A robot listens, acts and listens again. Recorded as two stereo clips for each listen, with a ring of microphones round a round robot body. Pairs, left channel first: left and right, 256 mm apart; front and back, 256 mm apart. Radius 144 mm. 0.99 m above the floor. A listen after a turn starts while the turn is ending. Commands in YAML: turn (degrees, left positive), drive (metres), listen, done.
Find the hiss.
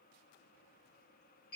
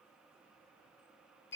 listen: true
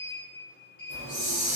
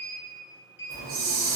turn: 145
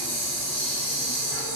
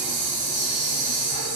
turn: 60
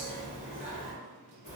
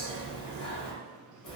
done: "Found it: a hiss, straight ahead."